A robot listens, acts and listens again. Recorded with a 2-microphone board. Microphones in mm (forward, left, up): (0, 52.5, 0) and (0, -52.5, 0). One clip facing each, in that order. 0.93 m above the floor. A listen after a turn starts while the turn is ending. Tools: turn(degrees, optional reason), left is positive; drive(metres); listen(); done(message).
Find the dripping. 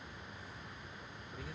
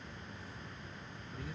listen()
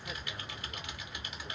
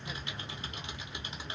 listen()
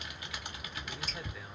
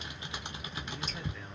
turn(degrees=-20, reason="The dripping: about 20° right or 160° right.")
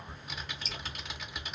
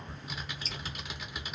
turn(degrees=-135, reason="So it is at 135° right.")
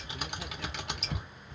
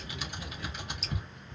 turn(degrees=-35, reason="The dripping is now 35° right.")
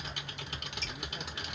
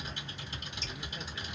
turn(degrees=-20, reason="The dripping is now 20° right.")
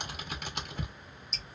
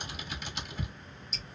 done("Found it: dripping, straight ahead, 1 to 2 m away.")